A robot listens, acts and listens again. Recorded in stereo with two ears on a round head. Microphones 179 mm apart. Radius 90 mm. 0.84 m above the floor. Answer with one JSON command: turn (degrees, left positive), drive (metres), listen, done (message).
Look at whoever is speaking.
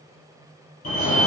{"listen": true}
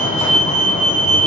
{"listen": true}
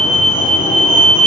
{"done": "I can't make out anyone speaking to turn to."}